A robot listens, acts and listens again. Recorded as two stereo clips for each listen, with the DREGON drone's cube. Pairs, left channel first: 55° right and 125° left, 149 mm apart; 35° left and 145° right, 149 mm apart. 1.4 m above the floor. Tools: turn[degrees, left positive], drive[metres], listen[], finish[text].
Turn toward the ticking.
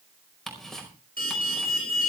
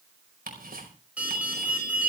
Thought: The ticking: 145° right.
Action: turn[-145]
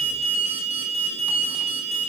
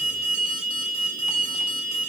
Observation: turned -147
Action: listen[]
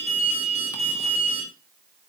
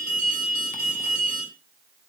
Action: listen[]
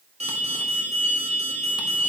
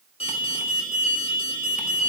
Action: finish[Facing where the ticking came from. I can't hear it now.]